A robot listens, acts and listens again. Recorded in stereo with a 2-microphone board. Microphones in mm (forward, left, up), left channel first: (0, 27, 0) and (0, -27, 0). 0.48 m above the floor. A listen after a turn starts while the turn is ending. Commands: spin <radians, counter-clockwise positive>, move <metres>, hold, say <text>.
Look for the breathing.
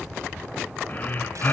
spin 0.61
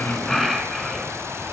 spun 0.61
say Facing the breathing.